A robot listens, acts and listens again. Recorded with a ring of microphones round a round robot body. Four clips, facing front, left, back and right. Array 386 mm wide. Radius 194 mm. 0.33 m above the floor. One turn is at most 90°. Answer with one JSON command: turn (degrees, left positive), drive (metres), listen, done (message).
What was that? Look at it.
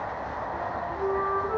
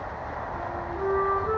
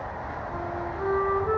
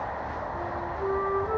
{"turn": 90}
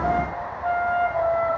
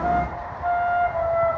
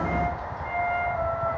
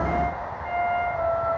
{"turn": 45}
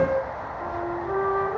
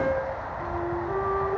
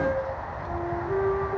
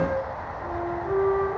{"done": "Found it: a flute, straight ahead."}